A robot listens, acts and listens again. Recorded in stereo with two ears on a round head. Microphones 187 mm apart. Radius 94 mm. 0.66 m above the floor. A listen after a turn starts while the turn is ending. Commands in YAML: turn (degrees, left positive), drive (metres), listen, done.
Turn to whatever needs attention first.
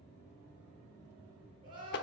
turn: -25
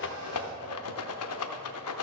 listen: true
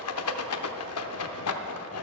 listen: true
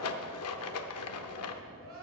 turn: -130
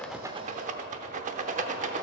listen: true
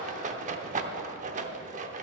listen: true
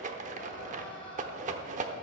done: "Found it: crying, straight ahead, 2 to 4 m away."